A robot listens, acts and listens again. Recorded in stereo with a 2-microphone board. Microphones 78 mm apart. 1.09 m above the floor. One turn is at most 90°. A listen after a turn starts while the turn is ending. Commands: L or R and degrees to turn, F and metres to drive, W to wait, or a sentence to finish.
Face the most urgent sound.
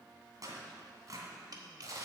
W
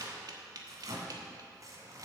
W
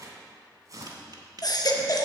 L55
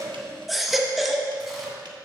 Facing the baby crying.